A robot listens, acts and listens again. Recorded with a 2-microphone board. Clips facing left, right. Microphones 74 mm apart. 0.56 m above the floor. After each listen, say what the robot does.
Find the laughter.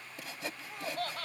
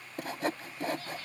Turn 70° left.
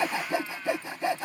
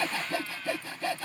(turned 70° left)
Keep listening.
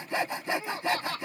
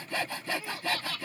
Turn 35° left.
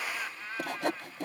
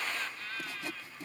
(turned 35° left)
Turn 20° left.
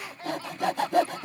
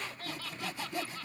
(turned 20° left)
Turn 20° left.
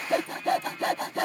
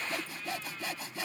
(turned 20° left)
Keep listening.
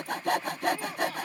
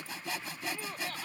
Facing the laughter.